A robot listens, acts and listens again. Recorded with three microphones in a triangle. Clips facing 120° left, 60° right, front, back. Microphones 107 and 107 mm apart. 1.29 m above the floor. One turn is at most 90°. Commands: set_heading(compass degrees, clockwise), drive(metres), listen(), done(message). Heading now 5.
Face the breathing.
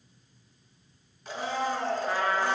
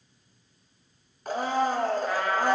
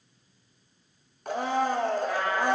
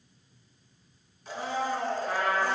listen()
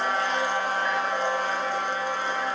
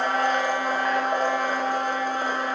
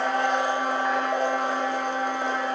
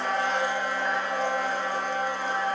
listen()
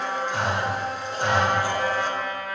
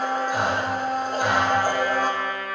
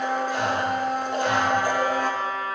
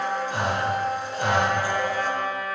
set_heading(95)
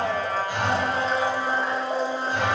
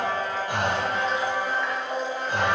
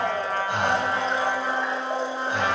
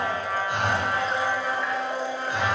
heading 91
set_heading(146)
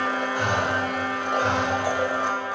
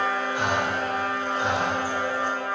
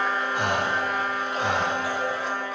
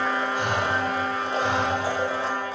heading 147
done("Found it: breathing, straight ahead, 1 to 2 m away.")